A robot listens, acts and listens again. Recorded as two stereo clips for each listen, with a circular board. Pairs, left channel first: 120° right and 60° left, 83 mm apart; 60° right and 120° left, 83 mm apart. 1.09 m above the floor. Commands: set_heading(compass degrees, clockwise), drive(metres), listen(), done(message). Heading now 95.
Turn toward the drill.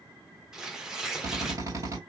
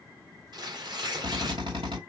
set_heading(345)
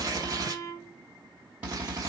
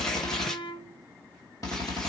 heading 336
set_heading(346)
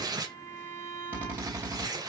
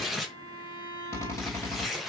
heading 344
done("Facing the drill, 2 to 4 m away.")